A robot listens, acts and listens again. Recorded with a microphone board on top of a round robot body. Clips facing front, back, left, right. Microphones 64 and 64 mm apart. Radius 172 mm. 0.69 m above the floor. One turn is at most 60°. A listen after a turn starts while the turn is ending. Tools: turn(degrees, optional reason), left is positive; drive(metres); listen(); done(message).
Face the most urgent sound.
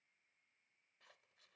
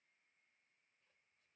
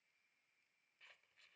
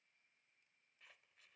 listen()
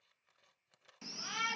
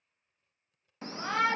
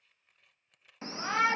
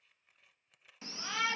turn(degrees=60, reason="The shout: 140° left.")
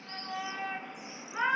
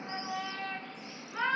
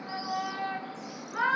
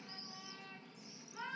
turn(degrees=60, reason="The shout is now 80° left.")
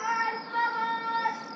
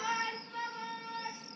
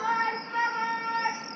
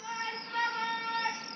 turn(degrees=20, reason="The shout is now 20° left.")
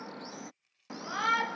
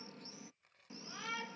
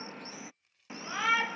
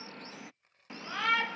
done("Found it: a shout, straight ahead.")